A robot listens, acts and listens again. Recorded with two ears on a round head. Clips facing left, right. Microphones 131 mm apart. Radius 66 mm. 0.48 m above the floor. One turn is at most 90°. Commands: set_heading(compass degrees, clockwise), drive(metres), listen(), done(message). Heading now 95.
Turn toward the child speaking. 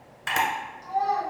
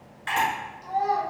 set_heading(125)
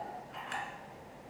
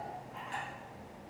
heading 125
listen()
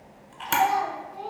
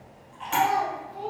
set_heading(215)
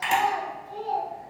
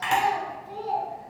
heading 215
set_heading(270)
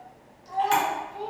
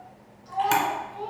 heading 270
set_heading(250)
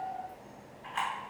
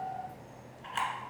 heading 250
listen()
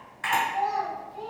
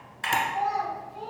done("Facing the child speaking, 1 to 2 m away.")